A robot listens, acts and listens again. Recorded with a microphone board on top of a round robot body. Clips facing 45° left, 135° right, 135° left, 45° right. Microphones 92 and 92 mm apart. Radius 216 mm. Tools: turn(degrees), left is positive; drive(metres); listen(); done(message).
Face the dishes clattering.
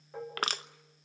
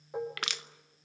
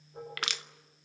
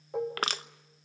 turn(degrees=-60)
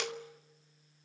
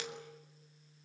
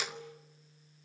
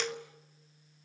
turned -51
turn(degrees=-10)
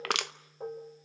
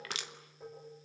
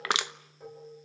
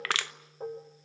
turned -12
done("Found it: dishes clattering, straight ahead.")